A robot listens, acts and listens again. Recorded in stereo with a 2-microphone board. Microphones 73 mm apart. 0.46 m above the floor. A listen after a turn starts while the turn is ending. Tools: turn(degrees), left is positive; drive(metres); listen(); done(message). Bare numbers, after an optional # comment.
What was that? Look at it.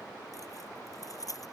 # The keys jangling: about 50° left or 130° left.
turn(50)
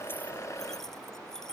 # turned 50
done("Facing the keys jangling.")